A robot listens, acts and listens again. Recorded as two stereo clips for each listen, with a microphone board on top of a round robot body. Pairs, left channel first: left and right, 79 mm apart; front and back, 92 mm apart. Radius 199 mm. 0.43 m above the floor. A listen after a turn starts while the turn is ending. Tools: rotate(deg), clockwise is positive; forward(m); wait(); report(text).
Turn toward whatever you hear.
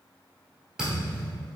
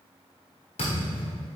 report("Found it: a thud, straight ahead, under 1 m away.")